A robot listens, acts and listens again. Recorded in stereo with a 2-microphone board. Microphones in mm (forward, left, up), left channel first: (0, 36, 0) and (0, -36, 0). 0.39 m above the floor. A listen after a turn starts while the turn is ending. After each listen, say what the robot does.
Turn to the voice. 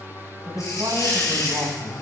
Turn 65° right.
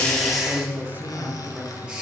Turn 30° right.
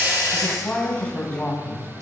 Turn 15° left.
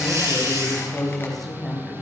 Facing the woman speaking.